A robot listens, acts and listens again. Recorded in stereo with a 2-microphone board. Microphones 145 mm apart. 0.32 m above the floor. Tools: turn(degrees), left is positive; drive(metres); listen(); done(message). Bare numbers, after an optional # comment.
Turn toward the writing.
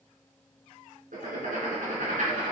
# The writing: about 70° right or 110° right.
turn(-70)
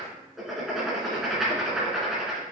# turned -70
done("Facing the writing, 2 to 4 m away.")